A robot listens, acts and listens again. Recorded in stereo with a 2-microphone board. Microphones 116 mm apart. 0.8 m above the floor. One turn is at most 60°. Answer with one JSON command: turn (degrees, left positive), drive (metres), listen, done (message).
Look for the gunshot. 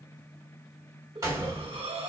{"turn": -30}
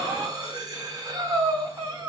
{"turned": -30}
{"listen": true}
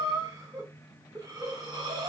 {"done": "I heard a gunshot, but can't make it out now. It was about straight ahead or 120° right."}